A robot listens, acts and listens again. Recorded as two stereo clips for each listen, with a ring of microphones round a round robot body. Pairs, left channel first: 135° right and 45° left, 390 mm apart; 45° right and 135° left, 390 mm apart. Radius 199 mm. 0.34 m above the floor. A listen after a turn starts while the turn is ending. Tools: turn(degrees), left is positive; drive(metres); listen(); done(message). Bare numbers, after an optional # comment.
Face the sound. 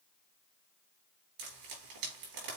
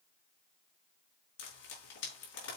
# The frying: 10° left.
turn(10)
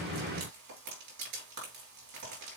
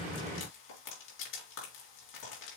done("Found it: frying, straight ahead, 2 to 4 m away.")